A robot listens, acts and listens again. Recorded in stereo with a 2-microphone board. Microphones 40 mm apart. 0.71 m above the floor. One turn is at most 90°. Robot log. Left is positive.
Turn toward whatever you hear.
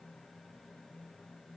cmd idle
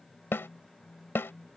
cmd yaw +90
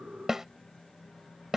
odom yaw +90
note: So it is at 10° right.
cmd yaw -10
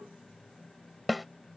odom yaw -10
end: Facing the snare drum.